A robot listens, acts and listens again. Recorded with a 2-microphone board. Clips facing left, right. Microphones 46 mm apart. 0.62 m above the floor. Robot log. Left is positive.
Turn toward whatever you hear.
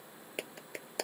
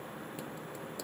note: The clap: about 65° left or 115° left.
cmd yaw +65
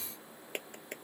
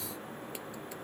note: So it is at 50° left.
cmd yaw +50
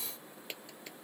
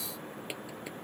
cmd idle
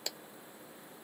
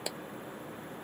note: The clap is now 10° right.
cmd yaw -10
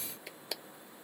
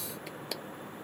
end: Facing the clap.